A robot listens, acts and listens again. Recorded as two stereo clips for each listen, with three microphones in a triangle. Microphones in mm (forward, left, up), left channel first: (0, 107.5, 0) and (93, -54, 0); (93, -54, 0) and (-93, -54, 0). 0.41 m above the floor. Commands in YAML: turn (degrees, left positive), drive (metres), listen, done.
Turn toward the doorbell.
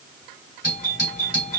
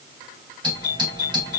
turn: 120
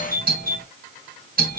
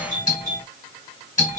turn: -35
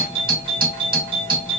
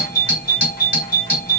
done: "Facing the doorbell."